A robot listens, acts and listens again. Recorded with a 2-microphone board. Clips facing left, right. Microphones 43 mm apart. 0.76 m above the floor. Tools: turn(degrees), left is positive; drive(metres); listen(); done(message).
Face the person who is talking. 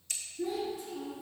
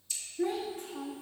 turn(degrees=-55)
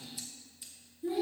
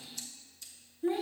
turn(degrees=-60)
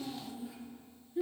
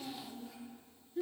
turn(degrees=10)
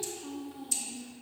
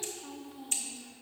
done("Facing the child speaking, under 1 m away.")